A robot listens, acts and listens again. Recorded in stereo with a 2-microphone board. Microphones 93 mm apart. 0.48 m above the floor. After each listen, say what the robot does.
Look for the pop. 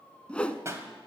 Turn 30° right.
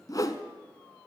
Keep listening.
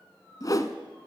I heard a pop, but can't make it out now. It was about straight ahead or 120° right.